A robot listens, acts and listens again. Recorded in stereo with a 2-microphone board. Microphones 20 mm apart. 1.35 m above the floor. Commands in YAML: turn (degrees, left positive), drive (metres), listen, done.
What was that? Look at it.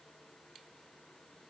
listen: true
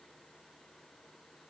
listen: true
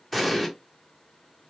turn: 30
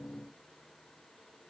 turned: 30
listen: true
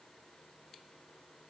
done: "I heard an explosion, but can't make it out now. It was about 30° right or 150° left."